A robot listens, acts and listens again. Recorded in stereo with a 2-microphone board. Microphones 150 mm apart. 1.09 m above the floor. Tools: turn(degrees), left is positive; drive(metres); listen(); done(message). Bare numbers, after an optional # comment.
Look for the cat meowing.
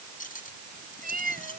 # The cat meowing: about 70° right or 110° right.
turn(-70)
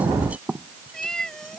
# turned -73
done("Facing the cat meowing.")